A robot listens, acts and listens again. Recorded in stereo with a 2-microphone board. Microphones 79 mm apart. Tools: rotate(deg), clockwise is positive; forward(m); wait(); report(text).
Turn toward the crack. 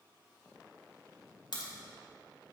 rotate(-70)
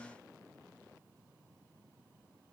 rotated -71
wait()
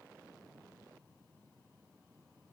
report("I heard a crack, but can't make it out now. It was about straight ahead or 40° left.")